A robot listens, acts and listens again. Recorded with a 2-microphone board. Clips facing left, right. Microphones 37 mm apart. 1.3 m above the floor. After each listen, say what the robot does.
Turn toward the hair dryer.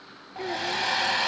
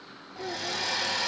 Turn 40° left.
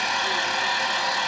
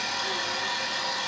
Turn 100° left.
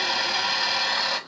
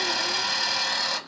Turn 15° left.
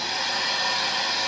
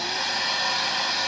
Found it: a hair dryer, straight ahead, under 1 m away.